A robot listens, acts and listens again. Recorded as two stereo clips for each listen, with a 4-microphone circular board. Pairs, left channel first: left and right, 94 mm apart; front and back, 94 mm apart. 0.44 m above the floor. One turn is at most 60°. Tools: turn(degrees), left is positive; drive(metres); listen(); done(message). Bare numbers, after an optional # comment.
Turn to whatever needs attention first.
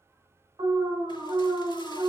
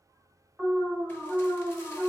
# The alarm: 105° right.
turn(-60)
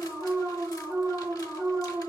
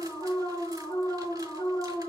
# The alarm is now 35° right.
turn(-35)
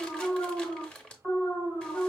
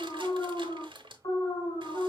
done("Found it: an alarm, straight ahead, 1 to 2 m away.")